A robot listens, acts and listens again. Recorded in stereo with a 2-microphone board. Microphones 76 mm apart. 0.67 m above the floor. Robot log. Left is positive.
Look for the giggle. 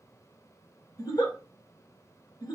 note: The giggle: about 55° left or 125° left.
cmd yaw +55
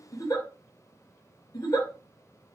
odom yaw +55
note: So it is at 65° left.
cmd yaw +65
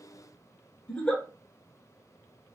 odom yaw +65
note: The giggle is now 15° left.
cmd yaw +15
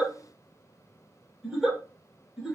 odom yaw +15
end: Facing the giggle, 1 to 2 m away.